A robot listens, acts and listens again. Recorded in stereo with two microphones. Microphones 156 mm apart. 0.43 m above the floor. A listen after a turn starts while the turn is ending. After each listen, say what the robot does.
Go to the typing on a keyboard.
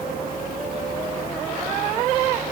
Keep listening.
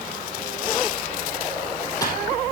Keep listening.
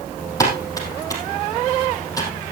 Turn 20° left.
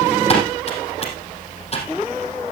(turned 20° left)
Turn 140° left.
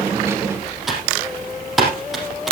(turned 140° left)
Drive 1.0 m forward.
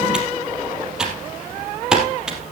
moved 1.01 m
Drive 1.0 m forward.
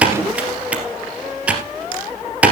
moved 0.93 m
Turn 10° right.
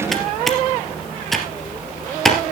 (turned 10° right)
Drive 1.0 m forward.
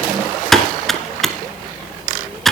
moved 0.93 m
Drive 1.0 m forward.
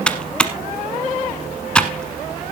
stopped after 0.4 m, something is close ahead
Arrived at the typing on a keyboard, straight ahead.